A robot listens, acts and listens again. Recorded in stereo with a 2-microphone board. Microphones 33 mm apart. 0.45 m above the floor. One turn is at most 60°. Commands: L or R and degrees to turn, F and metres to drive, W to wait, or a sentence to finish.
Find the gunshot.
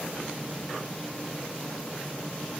W
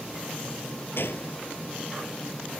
L60
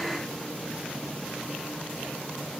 L30
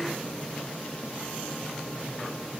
I heard a gunshot from this way, but can't make it out now.